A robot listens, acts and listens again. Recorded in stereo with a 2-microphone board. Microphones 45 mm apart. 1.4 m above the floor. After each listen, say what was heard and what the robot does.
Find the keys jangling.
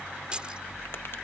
The keys jangling: about 25° right or 155° right. Turn 25° right.
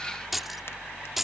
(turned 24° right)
Found it: keys jangling, straight ahead.